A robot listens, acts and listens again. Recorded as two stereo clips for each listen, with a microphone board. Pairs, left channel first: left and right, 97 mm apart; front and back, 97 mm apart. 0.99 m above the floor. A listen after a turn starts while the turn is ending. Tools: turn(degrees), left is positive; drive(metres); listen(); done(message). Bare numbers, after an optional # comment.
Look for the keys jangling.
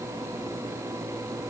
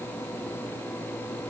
listen()
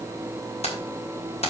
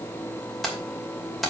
# The keys jangling: 90° left.
turn(90)
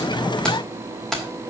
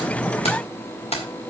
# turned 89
done("Facing the keys jangling, 2 to 4 m away.")